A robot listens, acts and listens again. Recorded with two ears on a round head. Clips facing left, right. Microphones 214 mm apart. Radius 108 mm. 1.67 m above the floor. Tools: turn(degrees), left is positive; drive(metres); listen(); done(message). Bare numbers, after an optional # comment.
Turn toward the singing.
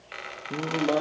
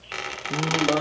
turn(-30)
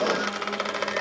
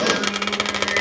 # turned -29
# So it is at 145° right.
turn(-145)
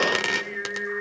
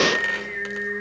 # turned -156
# The singing is now 10° left.
turn(10)
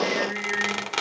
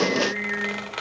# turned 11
done("Facing the singing, over 4 m away.")